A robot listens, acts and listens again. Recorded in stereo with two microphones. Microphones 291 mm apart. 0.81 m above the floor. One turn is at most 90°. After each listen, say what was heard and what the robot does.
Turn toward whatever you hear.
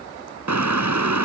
Turn 90° right.
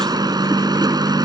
So it is at 15° right. Turn 15° right.
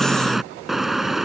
Facing the car horn.